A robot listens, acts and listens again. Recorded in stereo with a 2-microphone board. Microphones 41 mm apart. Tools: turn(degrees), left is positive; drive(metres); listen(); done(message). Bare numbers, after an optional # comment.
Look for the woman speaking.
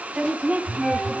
# The woman speaking: about 35° right or 145° right.
turn(-35)
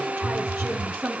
# So it is at 120° right.
turn(-120)
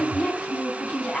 done("Facing the woman speaking, 2 to 4 m away.")